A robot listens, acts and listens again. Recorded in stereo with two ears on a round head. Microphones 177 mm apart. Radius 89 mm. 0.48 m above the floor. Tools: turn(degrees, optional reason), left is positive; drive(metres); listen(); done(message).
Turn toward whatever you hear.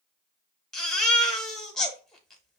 turn(degrees=30)
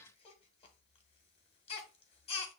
turn(degrees=145, reason="So it is at 145° left.")
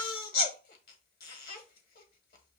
turn(degrees=55, reason="The baby crying is now 55° left.")
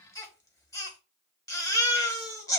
turn(degrees=20, reason="The baby crying is now 20° left.")
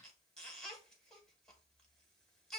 done("Found it: a baby crying, straight ahead.")